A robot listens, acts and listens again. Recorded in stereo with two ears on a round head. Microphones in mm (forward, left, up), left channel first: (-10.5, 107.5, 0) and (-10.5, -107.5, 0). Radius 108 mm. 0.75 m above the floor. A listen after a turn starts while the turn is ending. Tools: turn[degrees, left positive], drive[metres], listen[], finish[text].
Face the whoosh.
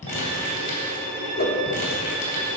Thought: The whoosh: about 40° left or 140° left.
Action: turn[40]
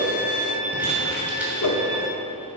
Thought: So it is at 100° left.
Action: turn[100]
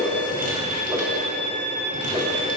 Action: listen[]
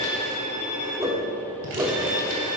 Thought: The whoosh is now 10° right.
Action: turn[-10]
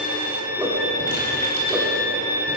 Action: listen[]
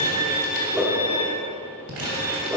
Action: finish[Facing the whoosh, 1 to 2 m away.]